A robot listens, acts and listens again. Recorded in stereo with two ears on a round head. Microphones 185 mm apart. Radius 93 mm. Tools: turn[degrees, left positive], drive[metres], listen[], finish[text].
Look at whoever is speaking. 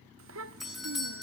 Thought: The child speaking: about 70° right or 110° right.
Action: turn[-70]
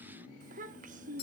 Thought: So it is at 40° right.
Action: turn[-40]
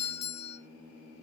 Action: listen[]
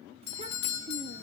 Thought: The child speaking is now 30° right.
Action: turn[-30]
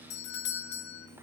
Action: listen[]
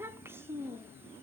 Thought: The child speaking is now 10° right.
Action: turn[-10]
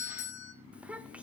Action: finish[Facing the child speaking, under 1 m away.]